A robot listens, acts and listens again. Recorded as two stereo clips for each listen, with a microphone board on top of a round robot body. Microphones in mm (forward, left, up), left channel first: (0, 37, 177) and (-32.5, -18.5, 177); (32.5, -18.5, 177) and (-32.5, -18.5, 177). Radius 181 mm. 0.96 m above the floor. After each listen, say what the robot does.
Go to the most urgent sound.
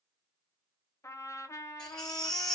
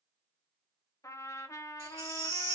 Turn 140° left.
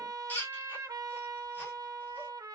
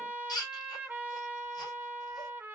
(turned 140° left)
Drive 1.0 m forward.
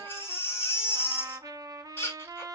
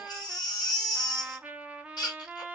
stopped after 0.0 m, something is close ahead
Something is in my way. I am facing the baby crying but have not reached it.